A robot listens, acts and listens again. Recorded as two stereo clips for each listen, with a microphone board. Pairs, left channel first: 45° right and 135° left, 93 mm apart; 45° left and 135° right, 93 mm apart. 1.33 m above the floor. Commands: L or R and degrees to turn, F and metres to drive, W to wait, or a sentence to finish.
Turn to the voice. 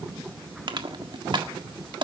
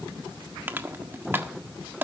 W
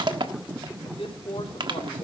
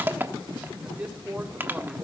R70
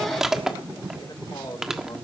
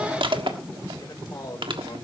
R10
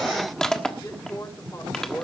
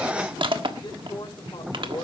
Found it: a man speaking, straight ahead.